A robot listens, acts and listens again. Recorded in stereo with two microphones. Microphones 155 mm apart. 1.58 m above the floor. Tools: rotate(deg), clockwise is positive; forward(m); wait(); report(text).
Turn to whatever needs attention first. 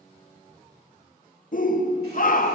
rotate(-60)
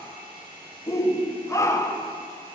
rotate(-20)
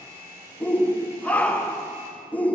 rotate(-10)
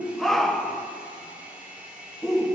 report("Found it: a shout, straight ahead.")